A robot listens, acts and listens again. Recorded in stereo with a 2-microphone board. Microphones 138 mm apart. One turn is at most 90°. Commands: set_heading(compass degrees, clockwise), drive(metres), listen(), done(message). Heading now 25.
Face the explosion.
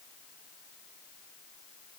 listen()
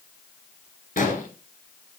set_heading(295)
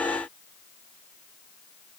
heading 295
done("Facing where the explosion came from. I can't hear it now.")